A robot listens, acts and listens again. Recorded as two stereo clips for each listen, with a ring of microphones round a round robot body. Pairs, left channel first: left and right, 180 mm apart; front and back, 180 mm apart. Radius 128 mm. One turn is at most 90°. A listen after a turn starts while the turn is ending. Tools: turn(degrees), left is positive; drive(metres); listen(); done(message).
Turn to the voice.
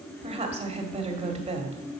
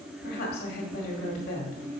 turn(degrees=-40)
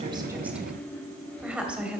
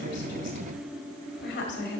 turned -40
done("Found it: a woman speaking, straight ahead, 1 to 2 m away.")